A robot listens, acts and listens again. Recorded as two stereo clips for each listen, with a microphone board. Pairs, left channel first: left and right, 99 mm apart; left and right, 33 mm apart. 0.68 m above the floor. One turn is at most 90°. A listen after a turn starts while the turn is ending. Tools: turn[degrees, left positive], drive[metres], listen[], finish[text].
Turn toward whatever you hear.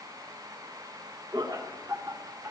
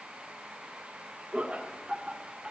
Thought: The laughter: about 30° right or 150° right.
Action: turn[-30]
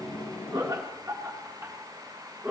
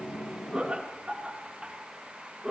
Thought: The laughter: about 20° right or 160° right.
Action: turn[-20]
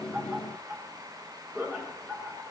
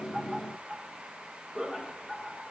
Thought: The laughter: about 20° right or 160° right.
Action: turn[-20]
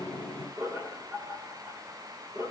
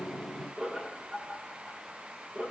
Thought: The laughter: about 35° right or 145° right.
Action: turn[-35]
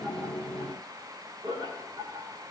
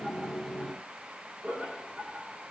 Thought: So it is at 120° right.
Action: turn[-90]
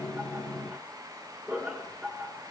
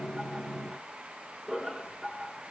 Thought: The laughter is now 20° right.
Action: turn[-20]
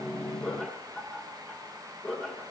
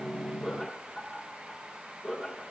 Action: finish[Found it: laughter, straight ahead, 2 to 4 m away.]